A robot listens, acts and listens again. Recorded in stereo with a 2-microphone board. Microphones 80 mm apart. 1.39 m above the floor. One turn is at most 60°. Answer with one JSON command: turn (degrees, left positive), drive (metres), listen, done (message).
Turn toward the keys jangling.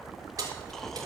{"turn": -50}
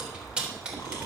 {"turn": -15}
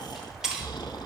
{"turn": -10}
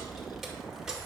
{"turn": -10}
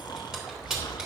{"turn": -10}
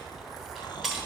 {"done": "Facing the keys jangling, 2 to 4 m away."}